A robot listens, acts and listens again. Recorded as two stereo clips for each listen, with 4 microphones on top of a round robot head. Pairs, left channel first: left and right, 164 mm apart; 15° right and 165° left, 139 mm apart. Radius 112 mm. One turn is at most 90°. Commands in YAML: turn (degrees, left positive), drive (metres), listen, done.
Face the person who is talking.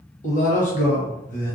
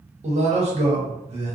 turn: 90
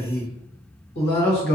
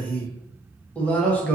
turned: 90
turn: 70
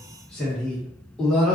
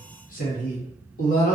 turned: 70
done: "Facing the man speaking, 1 to 2 m away."